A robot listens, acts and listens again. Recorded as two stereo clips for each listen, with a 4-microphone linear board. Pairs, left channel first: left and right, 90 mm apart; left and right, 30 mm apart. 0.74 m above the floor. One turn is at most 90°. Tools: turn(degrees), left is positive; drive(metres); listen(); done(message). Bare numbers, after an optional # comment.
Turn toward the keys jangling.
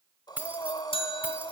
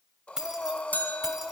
# The keys jangling: about 20° right or 160° right.
turn(-20)
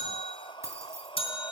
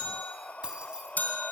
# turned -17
# The keys jangling: about 30° right or 150° right.
turn(-30)
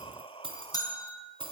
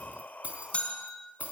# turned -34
# So it is at 115° right.
turn(-90)
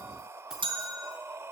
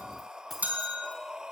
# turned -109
listen()
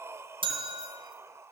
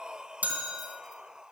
listen()
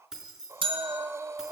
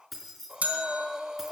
done("Facing the keys jangling, over 4 m away.")